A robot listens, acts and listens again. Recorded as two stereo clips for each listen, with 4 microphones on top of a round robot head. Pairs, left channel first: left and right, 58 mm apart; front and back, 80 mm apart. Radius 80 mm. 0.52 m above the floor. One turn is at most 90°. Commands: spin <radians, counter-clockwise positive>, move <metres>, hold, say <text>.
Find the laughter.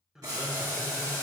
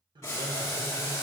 spin -1.57
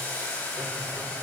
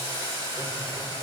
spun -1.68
spin -1.31
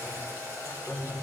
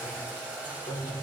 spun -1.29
say Facing the laughter, 1 to 2 m away.